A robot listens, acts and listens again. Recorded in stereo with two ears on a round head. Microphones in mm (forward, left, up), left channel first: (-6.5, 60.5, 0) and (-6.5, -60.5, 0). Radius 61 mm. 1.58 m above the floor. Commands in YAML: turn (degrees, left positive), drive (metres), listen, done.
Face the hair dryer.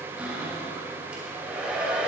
turn: -30
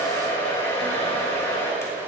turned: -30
turn: 20
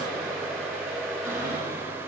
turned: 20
done: "Facing the hair dryer."